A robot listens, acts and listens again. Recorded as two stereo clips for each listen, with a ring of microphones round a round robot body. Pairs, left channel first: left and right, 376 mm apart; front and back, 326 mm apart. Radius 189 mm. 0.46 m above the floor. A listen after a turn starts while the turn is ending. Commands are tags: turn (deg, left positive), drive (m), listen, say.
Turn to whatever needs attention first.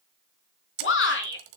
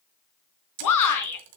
<turn deg="30"/>
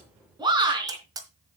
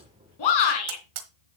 <turn deg="-10"/>
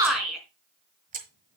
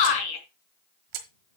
<say>Facing the shout, over 4 m away.</say>